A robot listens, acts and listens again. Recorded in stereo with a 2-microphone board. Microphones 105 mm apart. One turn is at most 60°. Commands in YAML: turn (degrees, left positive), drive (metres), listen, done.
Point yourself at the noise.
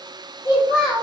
turn: 50
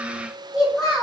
done: "Found it: a child speaking, straight ahead."